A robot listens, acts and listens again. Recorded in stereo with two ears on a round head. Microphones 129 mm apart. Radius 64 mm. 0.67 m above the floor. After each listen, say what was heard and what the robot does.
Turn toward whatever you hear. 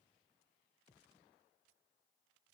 Keep listening.
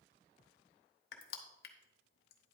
The crushing: about 70° left or 110° left. Turn 70° left.
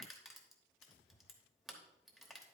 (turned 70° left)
Facing the crushing, 1 to 2 m away.